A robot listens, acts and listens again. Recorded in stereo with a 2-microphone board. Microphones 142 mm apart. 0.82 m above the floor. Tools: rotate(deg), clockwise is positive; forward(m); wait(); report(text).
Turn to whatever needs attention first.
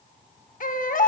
rotate(-75)
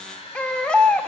rotate(-10)
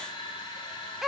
report("Found it: a baby crying, straight ahead.")